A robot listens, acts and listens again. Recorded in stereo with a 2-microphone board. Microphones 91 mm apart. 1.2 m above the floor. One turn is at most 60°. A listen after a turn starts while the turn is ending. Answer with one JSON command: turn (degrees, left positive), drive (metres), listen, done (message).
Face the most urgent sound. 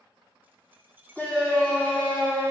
{"turn": 30}
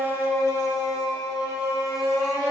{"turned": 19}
{"turn": 60}
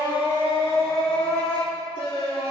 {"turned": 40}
{"turn": 60}
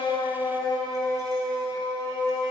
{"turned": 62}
{"turn": 45}
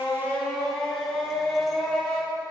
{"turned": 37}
{"turn": 10}
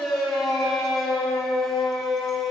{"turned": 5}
{"done": "Found it: a shout, straight ahead, 2 to 4 m away."}